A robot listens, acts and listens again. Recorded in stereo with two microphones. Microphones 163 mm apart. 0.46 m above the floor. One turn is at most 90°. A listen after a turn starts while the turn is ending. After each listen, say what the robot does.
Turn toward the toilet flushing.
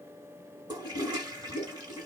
Turn 30° right.
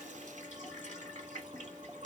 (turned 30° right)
Turn 90° right.
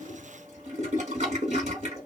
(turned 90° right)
Turn 60° right.
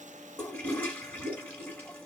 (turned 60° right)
Turn 15° left.
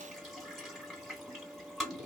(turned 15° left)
Facing the toilet flushing.